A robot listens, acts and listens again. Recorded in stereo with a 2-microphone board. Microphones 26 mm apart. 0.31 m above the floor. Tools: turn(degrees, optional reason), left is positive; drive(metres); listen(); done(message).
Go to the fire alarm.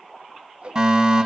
turn(degrees=-25, reason="The fire alarm: about 25° right or 155° right.")
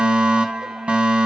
turn(degrees=-125, reason="So it is at 125° right.")
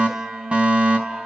turn(degrees=-55, reason="The fire alarm is now 55° right.")
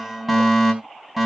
drive(metres=1.0)
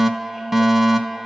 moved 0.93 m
turn(degrees=-10, reason="The fire alarm is now 10° right.")
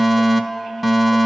drive(metres=1.0)
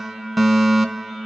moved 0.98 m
drive(metres=1.0)
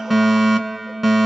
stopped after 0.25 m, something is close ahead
done("I am next to the fire alarm.")